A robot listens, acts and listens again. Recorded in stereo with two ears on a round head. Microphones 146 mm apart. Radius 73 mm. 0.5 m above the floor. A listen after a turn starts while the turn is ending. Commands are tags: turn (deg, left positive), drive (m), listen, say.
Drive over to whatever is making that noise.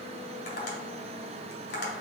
<turn deg="65"/>
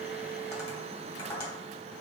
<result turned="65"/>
<turn deg="25"/>
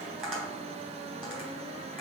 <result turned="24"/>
<drive m="1.0"/>
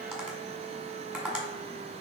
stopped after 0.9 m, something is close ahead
<say>I am next to the tapping.</say>